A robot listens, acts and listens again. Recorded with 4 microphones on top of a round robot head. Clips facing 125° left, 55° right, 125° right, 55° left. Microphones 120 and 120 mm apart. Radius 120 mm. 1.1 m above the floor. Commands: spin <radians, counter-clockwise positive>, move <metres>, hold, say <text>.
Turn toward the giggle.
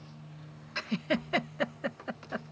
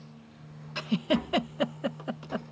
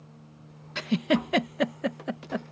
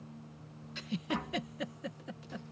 spin -2.27
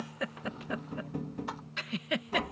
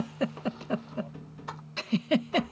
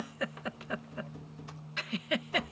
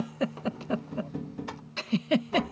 say Facing the giggle.